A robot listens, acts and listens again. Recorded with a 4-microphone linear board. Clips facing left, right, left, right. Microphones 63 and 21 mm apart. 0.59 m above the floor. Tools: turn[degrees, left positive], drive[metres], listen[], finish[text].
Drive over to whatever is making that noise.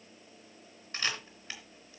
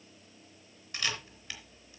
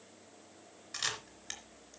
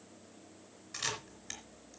Thought: The camera shutter: about 30° left or 150° left.
Action: turn[30]
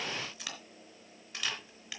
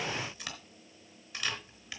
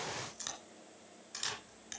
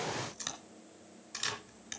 Action: drive[1.0]
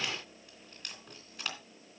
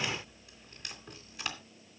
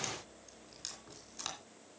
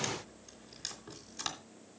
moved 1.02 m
Action: drive[1.0]
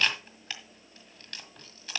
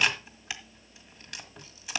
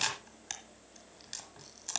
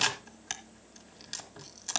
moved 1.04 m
Thought: The camera shutter is now 10° right.
Action: turn[-10]
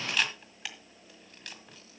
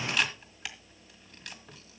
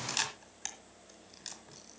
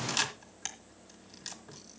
Action: drive[1.0]
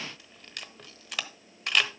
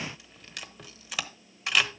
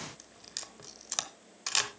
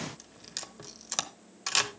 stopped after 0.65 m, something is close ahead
Action: finish[I am next to the camera shutter.]